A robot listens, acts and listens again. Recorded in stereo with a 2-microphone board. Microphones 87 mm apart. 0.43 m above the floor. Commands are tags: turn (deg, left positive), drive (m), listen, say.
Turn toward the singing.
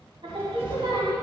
<turn deg="-75"/>
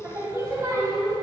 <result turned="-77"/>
<turn deg="-40"/>
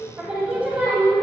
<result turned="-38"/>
<turn deg="-25"/>
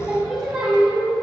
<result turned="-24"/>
<turn deg="-15"/>
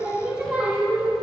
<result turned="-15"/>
<say>Found it: singing, straight ahead.</say>